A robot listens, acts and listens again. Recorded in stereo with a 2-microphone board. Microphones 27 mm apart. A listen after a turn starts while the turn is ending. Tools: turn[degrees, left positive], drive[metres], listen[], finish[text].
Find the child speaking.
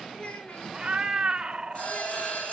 Thought: The child speaking: about 50° left or 130° left.
Action: turn[50]
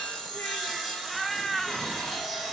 Action: listen[]
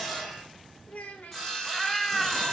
Thought: So it is at 80° left.
Action: turn[80]
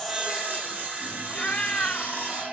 Action: listen[]
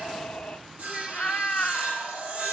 Action: listen[]
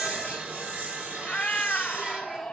Action: finish[Facing where the child speaking came from. I can't hear it now.]